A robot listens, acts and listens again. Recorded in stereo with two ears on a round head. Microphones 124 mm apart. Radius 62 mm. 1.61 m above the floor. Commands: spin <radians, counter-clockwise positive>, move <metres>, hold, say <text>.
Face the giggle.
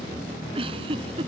spin -0.61
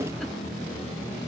hold
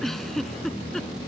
say Facing the giggle.